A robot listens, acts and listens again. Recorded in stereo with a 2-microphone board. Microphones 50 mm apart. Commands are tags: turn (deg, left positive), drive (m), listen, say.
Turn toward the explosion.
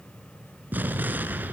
<turn deg="-40"/>
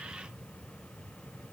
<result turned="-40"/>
<listen/>
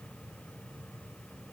<say>I heard an explosion, but can't make it out now. It was about straight ahead or 100° right.</say>